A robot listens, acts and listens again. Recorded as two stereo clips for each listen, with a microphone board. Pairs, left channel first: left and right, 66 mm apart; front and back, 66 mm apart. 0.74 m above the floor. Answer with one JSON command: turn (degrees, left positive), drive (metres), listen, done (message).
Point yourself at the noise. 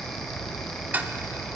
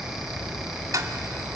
{"turn": -145}
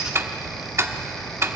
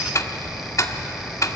{"turn": -40}
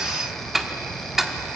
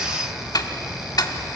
{"done": "Found it: ticking, straight ahead."}